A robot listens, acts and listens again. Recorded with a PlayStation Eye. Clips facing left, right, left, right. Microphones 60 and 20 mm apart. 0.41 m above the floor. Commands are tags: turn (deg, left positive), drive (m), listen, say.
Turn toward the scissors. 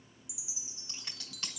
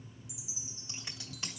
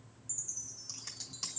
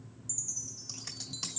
<turn deg="-30"/>
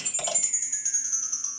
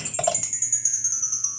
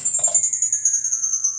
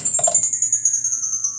<listen/>
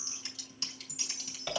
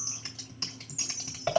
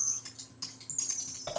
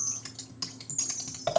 <turn deg="-140"/>
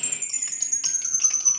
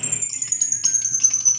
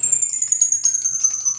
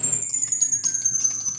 <listen/>
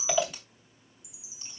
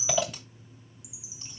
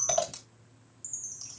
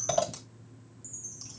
<say>Facing the scissors, 2 to 4 m away.</say>